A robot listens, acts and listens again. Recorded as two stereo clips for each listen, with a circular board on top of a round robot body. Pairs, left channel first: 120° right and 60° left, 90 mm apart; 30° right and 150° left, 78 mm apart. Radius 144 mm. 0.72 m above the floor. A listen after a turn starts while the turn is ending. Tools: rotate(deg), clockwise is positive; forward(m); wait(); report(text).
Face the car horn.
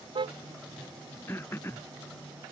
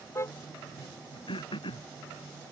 rotate(-30)
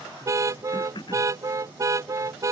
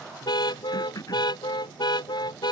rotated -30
report("Facing the car horn.")